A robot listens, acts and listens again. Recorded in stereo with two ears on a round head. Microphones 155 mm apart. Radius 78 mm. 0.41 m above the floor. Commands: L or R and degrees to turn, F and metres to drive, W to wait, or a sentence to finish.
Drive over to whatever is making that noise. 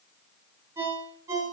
R30
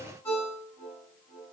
L15
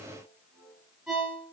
F1.0
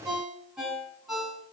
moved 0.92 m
F1.0
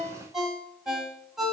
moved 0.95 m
F1.0
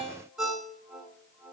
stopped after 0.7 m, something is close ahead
Arrived at the ringtone, straight ahead.